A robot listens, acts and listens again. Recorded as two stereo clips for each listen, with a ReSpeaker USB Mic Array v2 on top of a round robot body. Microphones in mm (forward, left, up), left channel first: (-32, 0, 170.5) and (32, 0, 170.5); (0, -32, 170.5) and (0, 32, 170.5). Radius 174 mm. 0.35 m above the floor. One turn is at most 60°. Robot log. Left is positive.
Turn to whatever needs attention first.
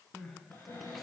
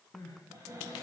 note: The crying: 95° right.
cmd yaw -60
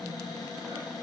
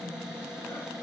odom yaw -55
note: Nothing new. It was at 40° right.
cmd yaw -40
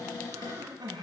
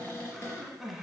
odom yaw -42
end: Facing the crying.